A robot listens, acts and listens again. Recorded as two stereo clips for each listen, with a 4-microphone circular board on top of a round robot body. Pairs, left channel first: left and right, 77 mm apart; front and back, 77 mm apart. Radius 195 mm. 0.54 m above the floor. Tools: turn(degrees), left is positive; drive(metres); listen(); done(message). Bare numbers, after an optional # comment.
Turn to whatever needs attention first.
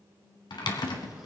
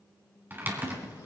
listen()
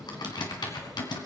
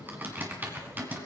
listen()
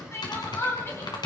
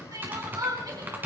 # The crying: 145° left.
turn(145)
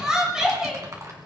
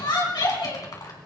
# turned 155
# The crying is now 10° right.
turn(-10)
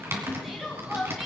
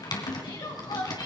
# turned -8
done("Found it: crying, straight ahead.")